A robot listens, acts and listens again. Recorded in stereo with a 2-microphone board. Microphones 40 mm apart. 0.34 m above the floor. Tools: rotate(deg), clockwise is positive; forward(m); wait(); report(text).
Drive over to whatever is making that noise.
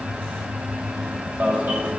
rotate(50)
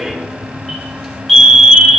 forward(1.0)
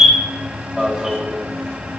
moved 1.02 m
forward(1.0)
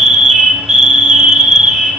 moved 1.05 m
forward(1.0)
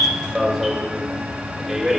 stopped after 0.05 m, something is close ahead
report("I am next to the alarm.")